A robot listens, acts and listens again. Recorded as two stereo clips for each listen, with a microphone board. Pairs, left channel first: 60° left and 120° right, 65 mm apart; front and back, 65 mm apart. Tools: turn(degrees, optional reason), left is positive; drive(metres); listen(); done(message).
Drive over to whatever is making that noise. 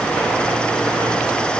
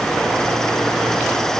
listen()
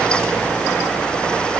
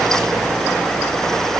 listen()
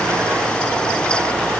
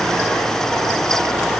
done("I can't make out anything to turn to.")